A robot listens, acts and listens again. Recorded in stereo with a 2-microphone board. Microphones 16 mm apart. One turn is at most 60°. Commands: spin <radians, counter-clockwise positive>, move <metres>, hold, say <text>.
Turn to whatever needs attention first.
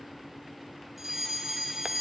spin -0.26
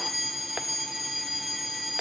say Facing the fire alarm.